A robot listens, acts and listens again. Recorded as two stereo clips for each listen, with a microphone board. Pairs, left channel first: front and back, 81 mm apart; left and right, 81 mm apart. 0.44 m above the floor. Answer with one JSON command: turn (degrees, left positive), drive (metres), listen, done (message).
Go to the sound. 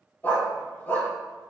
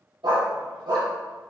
{"turn": -65}
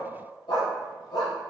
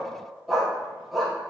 {"drive": 1.0}
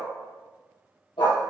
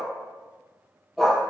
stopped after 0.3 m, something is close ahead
{"done": "Something is in my way. I am facing the dog barking but have not reached it."}